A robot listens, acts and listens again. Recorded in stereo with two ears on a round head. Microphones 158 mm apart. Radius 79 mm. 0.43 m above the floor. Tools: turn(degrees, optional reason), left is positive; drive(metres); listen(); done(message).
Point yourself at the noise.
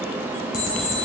turn(degrees=60, reason="The alarm clock: about 60° left or 120° left.")
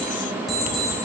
done("Found it: an alarm clock, straight ahead, 1 to 2 m away.")